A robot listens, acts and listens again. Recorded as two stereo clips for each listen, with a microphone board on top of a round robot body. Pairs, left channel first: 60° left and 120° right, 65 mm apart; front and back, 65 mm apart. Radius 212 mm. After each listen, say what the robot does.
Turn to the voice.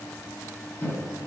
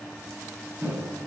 Keep listening.
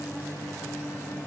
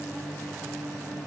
Keep listening.
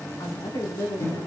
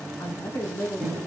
Turn 55° left.
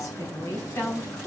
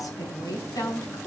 Turn 25° left.
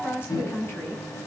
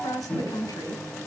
Found it: a woman speaking, straight ahead, over 4 m away.